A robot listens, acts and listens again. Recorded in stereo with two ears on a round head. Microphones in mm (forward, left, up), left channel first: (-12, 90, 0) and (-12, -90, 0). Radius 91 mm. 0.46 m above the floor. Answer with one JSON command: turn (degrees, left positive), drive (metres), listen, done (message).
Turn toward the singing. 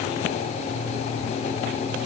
{"listen": true}
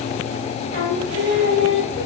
{"turn": 55}
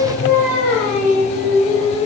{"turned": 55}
{"done": "Facing the singing, over 4 m away."}